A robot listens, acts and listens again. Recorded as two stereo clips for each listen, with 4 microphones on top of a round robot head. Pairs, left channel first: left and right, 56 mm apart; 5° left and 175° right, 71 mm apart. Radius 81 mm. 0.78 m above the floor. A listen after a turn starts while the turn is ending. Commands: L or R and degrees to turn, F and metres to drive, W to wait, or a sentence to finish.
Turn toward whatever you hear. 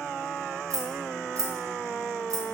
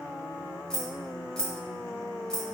R80
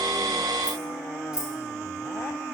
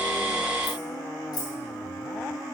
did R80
R15
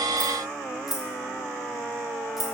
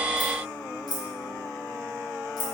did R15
Found it: keys jangling, straight ahead.